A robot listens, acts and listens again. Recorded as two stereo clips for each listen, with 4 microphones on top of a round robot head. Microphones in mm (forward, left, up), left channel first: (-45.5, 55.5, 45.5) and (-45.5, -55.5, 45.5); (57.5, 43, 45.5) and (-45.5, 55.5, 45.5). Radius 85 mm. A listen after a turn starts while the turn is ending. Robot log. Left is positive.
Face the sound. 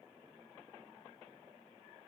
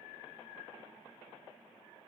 cmd idle
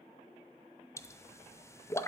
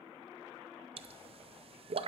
note: The pop: 155° left.
cmd yaw +155
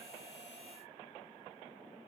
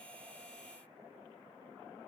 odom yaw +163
note: Nothing new. It was at 10° right.
cmd yaw -10
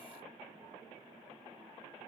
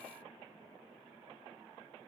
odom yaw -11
end: I heard a pop from this way, but can't make it out now.